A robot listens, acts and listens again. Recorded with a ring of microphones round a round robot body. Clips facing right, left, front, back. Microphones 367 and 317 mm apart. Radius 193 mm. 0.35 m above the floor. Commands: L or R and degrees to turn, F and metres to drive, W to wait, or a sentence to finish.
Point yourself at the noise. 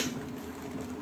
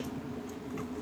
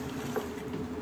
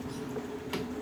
W
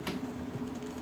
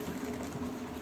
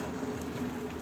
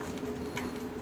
W
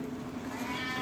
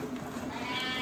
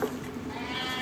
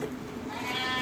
L110
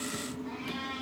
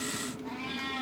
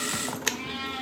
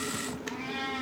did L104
L10
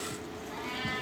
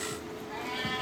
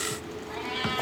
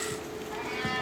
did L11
Facing the cat meowing, over 4 m away.